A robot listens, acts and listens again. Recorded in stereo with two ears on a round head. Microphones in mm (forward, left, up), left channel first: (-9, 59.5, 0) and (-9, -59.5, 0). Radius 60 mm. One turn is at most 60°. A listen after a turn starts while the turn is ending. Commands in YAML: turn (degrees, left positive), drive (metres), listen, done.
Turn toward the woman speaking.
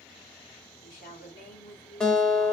turn: 60
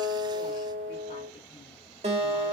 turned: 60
listen: true
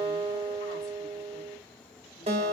listen: true
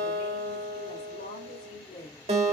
turn: 50
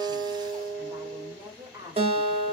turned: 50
turn: -20
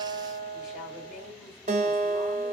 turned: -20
listen: true
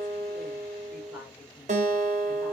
listen: true
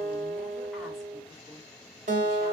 done: "I heard a woman speaking from this way, but can't make it out now."